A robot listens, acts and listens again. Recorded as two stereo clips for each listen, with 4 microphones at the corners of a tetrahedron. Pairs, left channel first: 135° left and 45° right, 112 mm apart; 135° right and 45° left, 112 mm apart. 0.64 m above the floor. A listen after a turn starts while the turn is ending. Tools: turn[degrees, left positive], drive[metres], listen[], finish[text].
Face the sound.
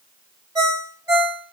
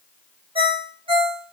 Thought: The ringtone: 10° left.
Action: turn[10]
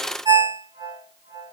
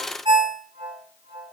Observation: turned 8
Action: finish[Facing the ringtone.]